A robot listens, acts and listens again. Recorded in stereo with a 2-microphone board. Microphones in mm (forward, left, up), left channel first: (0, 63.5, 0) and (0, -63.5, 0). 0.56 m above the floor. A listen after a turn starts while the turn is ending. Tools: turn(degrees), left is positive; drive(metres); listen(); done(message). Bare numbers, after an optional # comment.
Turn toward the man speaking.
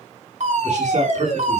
# The man speaking: about 70° right or 110° right.
turn(-70)
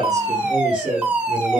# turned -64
# So it is at 45° right.
turn(-45)
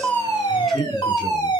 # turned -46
done("Facing the man speaking, over 4 m away.")